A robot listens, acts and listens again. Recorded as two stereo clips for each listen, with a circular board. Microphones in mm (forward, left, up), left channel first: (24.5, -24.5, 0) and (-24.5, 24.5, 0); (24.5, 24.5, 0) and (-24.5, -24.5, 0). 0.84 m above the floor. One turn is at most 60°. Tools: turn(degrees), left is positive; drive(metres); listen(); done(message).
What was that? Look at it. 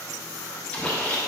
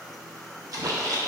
turn(degrees=-60)
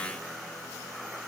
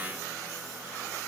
turn(degrees=-55)
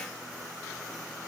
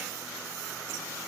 done("Facing where the splash came from. I can't hear it now.")